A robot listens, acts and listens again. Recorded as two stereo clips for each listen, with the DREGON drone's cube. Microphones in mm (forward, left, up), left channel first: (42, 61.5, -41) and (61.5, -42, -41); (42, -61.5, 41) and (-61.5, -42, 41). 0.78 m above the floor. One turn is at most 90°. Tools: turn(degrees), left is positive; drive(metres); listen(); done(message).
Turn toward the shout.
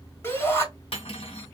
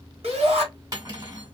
turn(degrees=90)
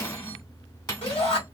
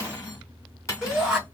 turn(degrees=85)
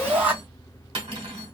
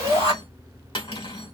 done("Found it: a shout, straight ahead.")